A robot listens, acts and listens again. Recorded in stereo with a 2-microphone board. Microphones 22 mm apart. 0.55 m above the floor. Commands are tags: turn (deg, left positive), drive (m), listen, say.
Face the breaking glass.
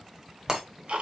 <turn deg="-35"/>
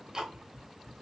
<listen/>
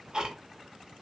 <say>I heard breaking glass, but can't make it out now. It was about straight ahead or 110° right.</say>